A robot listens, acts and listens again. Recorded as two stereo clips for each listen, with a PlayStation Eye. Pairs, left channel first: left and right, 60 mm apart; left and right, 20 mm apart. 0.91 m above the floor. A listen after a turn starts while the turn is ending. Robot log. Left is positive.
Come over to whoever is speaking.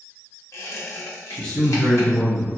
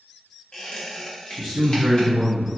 note: The man speaking: about 15° left or 165° left.
cmd yaw +15
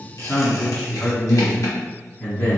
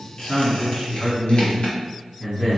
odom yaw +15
note: So it is at 155° left.
cmd yaw +155
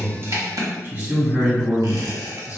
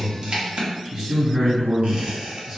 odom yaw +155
note: The man speaking is now 40° right.
cmd yaw -40
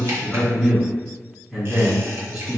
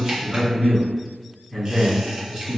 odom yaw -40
note: The man speaking is now 10° right.
cmd yaw -10
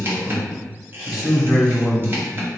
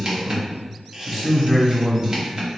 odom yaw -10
cmd fwd 1.0
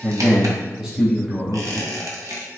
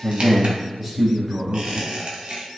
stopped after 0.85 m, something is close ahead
note: The man speaking is now 10° right.
cmd yaw -10
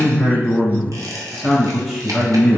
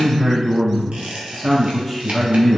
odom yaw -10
end: I am next to the man speaking.